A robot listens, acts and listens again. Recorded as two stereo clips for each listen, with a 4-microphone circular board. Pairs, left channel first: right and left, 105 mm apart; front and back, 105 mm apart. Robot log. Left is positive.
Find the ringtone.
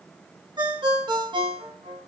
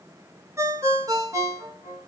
note: The ringtone: 125° left.
cmd yaw +125
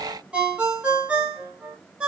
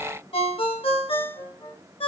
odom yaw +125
note: The ringtone is now 15° left.
cmd yaw +15
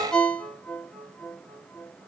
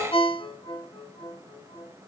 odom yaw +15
end: Found it: a ringtone, straight ahead.